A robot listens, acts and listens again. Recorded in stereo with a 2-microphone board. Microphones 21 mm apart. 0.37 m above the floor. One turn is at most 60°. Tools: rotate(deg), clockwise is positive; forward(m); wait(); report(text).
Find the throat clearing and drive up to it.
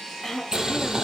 rotate(-30)
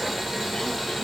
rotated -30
wait()
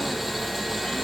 wait()
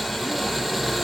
report("I heard throat clearing, but can't make it out now. It was about 20° right or 140° left. I did not reach it.")